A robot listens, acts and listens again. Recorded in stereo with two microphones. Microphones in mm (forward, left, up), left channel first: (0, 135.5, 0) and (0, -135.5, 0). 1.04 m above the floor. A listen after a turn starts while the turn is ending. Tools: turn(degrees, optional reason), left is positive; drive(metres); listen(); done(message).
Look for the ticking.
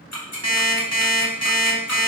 turn(degrees=70, reason="The ticking: about 70° left or 110° left.")
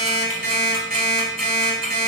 listen()
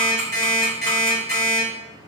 listen()
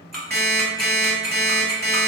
done("Found it: ticking, straight ahead, 1 to 2 m away.")